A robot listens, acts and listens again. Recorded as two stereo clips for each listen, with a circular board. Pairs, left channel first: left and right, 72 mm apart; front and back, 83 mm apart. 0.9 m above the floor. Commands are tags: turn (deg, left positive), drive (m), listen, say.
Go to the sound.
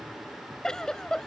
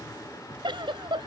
<turn deg="170"/>
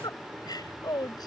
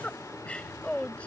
<turn deg="75"/>
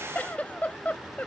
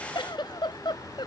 <turn deg="20"/>
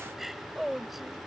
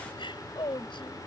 <drive m="1.0"/>
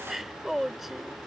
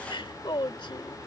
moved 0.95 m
<drive m="1.0"/>
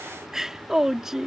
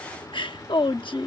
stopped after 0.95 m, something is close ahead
<turn deg="-10"/>
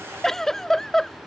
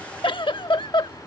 <say>I am next to the giggle.</say>